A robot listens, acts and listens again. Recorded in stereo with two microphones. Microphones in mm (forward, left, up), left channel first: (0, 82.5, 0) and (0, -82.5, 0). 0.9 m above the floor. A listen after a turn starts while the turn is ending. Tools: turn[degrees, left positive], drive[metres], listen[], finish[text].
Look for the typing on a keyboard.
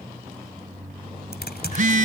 Action: turn[90]
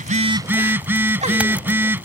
Action: listen[]
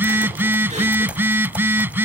Action: listen[]
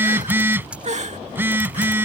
Thought: The typing on a keyboard is now 10° right.
Action: turn[-10]
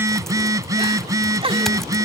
Action: listen[]
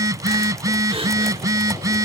Action: listen[]
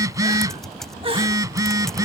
Action: finish[Facing the typing on a keyboard.]